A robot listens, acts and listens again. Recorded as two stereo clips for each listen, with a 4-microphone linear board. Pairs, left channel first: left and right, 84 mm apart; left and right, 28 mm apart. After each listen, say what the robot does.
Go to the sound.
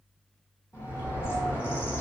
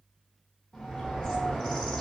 Turn 30° left.
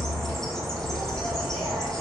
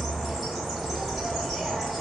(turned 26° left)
Drive 1.0 m forward.
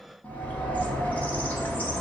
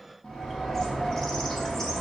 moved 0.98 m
Turn 20° left.
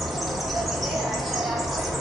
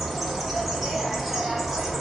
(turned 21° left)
Drive 1.0 m forward.
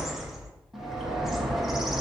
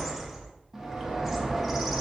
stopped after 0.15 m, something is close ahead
I am next to the bird.